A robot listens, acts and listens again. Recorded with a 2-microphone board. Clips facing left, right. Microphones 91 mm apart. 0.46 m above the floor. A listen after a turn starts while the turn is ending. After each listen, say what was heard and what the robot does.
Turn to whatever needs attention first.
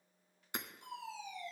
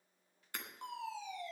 The fire alarm: about 65° right or 115° right. Turn 65° right.
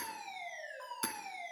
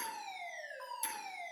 Found it: a fire alarm, straight ahead, over 4 m away.